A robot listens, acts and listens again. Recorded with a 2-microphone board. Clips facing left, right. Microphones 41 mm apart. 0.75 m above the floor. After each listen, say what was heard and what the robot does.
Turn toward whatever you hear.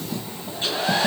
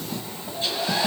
The hair dryer: about 40° left or 140° left. Turn 40° left.
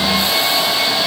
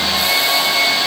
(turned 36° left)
Facing the hair dryer.